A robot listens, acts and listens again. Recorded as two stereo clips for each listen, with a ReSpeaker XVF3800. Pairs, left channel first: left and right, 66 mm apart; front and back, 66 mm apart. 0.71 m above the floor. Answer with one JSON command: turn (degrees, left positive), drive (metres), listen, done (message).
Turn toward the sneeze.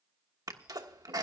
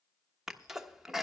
{"turn": -100}
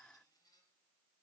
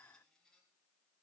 {"done": "I heard a sneeze from this way, but can't make it out now."}